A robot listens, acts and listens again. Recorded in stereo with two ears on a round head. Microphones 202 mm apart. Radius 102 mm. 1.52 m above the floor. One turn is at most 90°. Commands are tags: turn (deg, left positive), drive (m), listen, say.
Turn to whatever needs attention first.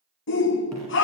<turn deg="60"/>
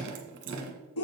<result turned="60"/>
<turn deg="65"/>
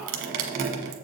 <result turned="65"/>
<listen/>
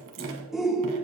<say>Found it: a shout, straight ahead, under 1 m away.</say>